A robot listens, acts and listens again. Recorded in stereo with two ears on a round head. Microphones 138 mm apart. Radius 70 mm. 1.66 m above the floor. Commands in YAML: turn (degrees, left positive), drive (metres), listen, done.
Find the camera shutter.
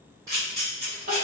turn: -25
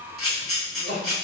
done: "Facing the camera shutter, 1 to 2 m away."